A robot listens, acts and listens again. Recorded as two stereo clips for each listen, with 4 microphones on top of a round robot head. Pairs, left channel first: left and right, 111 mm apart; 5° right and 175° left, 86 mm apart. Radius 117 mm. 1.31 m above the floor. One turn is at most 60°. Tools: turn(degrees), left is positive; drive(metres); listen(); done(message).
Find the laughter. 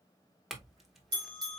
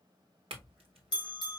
listen()
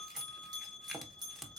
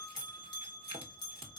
listen()
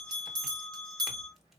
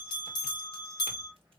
done("I can't make out laughter to turn to.")